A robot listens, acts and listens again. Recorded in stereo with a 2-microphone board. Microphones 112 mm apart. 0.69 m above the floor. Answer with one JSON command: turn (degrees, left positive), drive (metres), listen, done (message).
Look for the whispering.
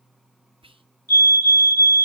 {"turn": -55}
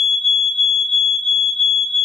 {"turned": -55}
{"listen": true}
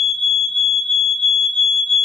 {"listen": true}
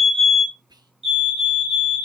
{"turn": -50}
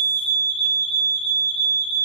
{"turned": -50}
{"listen": true}
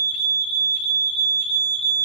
{"listen": true}
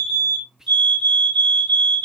{"done": "Found it: whispering, straight ahead, under 1 m away."}